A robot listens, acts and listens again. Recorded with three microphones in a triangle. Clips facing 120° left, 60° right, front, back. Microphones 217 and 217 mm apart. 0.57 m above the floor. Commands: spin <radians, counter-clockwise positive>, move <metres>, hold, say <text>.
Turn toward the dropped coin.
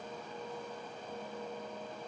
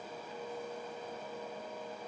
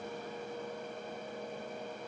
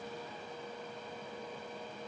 hold
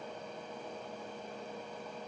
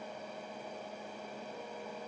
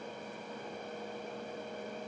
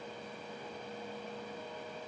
hold
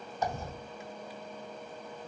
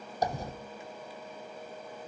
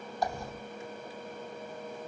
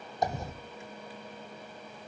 spin -1.92
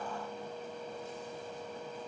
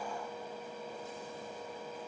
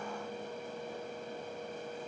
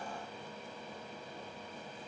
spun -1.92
say I heard a dropped coin from this way, but can't make it out now.